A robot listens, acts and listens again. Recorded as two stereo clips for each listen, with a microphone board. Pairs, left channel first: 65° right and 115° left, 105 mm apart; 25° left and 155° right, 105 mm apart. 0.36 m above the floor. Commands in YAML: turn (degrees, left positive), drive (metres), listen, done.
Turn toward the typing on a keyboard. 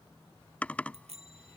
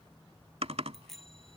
turn: -145
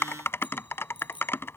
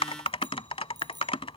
done: "Facing the typing on a keyboard."